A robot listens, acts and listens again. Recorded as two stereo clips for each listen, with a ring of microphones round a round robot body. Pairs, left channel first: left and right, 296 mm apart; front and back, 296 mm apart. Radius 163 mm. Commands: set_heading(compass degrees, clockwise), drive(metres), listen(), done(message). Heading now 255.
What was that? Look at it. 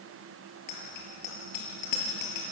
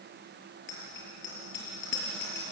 set_heading(195)
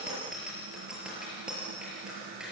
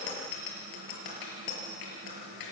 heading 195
done("Facing the bicycle bell.")